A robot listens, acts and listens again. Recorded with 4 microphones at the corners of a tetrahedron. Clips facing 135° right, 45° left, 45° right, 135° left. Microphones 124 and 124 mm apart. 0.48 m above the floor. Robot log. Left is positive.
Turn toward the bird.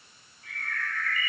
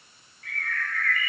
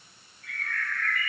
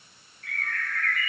note: The bird: 160° left.
cmd yaw +160
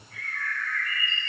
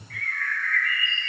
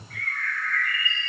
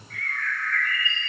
note: The bird is now 40° left.
cmd yaw +40
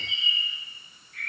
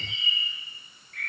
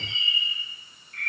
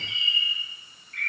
note: The bird is now 10° left.
cmd yaw +10
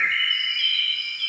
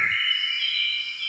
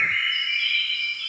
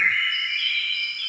end: Facing the bird, over 4 m away.